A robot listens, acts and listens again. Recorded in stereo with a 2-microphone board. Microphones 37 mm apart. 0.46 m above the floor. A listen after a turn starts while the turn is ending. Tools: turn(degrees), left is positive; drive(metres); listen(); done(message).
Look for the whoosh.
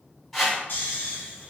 turn(degrees=30)
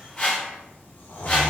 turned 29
turn(degrees=150)
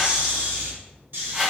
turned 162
turn(degrees=-15)
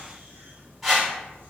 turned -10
done("Found it: a whoosh, straight ahead, 1 to 2 m away.")